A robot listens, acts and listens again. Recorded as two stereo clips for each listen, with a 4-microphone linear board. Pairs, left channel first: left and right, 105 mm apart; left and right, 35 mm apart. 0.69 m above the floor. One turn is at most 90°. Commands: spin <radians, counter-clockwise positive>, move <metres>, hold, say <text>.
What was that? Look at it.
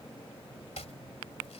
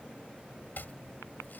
spin 1.57
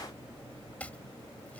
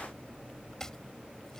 spin 0.26
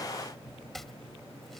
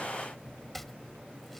say Found it: chopping, straight ahead.